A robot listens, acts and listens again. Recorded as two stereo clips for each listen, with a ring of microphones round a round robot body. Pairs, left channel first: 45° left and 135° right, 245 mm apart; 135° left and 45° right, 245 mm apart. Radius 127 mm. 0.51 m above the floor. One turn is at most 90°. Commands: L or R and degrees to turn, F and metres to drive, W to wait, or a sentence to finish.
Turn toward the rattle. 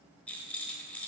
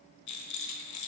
L90
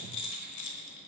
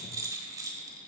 L35
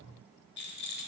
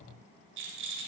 Found it: a rattle, straight ahead.